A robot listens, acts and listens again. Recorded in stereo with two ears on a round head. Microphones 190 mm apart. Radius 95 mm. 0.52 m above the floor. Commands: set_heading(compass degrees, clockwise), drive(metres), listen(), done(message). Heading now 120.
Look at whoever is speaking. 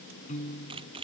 listen()
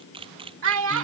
set_heading(190)
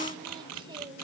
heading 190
listen()
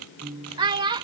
set_heading(215)
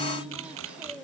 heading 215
listen()
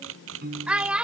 done("Facing the child speaking.")